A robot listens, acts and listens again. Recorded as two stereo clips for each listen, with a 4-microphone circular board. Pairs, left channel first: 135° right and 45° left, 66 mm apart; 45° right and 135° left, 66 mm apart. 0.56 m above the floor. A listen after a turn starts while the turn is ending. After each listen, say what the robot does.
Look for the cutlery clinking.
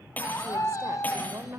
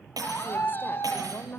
Turn 160° left.
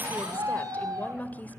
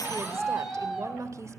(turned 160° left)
Keep listening.
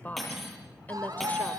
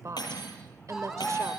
Turn 45° right.
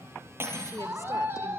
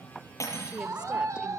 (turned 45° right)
Found it: cutlery clinking, straight ahead, over 4 m away.